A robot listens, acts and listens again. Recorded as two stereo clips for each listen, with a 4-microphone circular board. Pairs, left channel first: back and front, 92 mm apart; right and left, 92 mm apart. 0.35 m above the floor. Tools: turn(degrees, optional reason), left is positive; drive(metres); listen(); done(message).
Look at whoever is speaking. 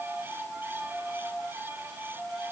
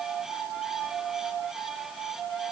listen()
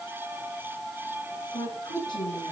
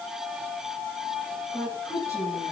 turn(degrees=-145, reason="The woman speaking: 145° right.")
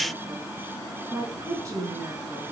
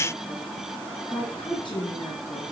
turn(degrees=-55, reason="The woman speaking is now 55° right.")
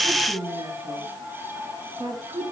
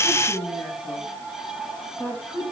turn(degrees=-20, reason="The woman speaking is now 20° right.")
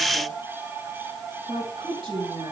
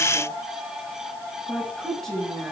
done("Facing the woman speaking, over 4 m away.")